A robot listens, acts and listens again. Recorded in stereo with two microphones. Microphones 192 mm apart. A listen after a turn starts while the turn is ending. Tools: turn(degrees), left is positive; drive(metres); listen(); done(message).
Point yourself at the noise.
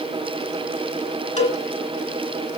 turn(degrees=35)
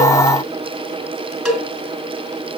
done("Found it: a cowbell, straight ahead.")